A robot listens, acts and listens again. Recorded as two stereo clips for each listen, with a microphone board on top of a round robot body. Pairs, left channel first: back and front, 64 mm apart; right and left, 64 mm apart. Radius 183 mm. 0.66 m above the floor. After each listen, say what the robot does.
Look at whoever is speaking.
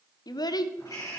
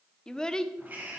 Turn 170° right.
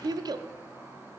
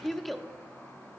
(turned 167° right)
Facing the child speaking.